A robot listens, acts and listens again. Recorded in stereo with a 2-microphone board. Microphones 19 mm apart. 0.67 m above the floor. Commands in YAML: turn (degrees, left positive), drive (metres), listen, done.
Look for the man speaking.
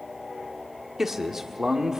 turn: -30
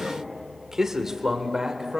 turn: -30
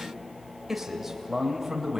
turn: -15
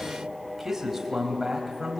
turn: -10
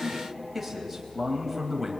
done: "Found it: a man speaking, straight ahead."